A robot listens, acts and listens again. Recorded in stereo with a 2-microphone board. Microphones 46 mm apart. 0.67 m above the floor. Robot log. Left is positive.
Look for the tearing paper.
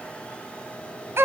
cmd idle
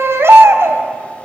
cmd idle
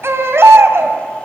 end: I can't make out tearing paper to turn to.